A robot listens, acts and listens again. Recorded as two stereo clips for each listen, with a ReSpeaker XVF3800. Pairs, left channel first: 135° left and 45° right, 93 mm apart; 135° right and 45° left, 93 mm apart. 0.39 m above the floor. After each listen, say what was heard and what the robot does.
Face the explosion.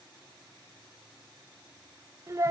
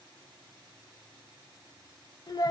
Keep listening.
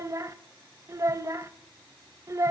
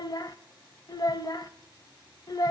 Keep listening.
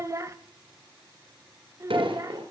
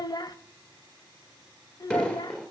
The explosion: 55° right. Turn 55° right.
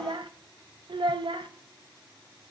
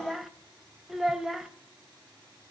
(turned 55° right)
Facing where the explosion came from. I can't hear it now.